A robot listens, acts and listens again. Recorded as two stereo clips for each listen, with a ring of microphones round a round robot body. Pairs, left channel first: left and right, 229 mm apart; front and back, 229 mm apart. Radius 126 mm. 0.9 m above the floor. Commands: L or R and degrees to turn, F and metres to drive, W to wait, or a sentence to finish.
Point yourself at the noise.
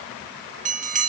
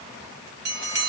R145
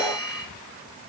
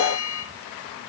Facing the bell.